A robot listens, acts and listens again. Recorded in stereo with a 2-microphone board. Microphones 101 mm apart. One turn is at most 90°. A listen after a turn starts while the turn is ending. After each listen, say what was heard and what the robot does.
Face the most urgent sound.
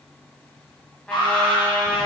The alarm: about 50° left or 130° left. Turn 50° left.
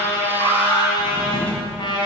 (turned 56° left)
So it is at 70° left. Turn 70° left.
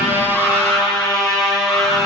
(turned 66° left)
Keep listening.
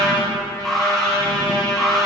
Facing the alarm.